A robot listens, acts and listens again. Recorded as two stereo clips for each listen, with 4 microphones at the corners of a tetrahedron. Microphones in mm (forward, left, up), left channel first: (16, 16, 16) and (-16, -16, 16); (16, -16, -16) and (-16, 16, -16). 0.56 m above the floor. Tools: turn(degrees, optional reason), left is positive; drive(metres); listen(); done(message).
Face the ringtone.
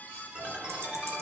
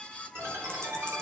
turn(degrees=165, reason="The ringtone: 165° left.")
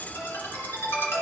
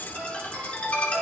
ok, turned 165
turn(degrees=25, reason="The ringtone is now 25° left.")
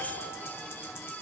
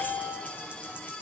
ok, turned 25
done("Facing the ringtone, 2 to 4 m away.")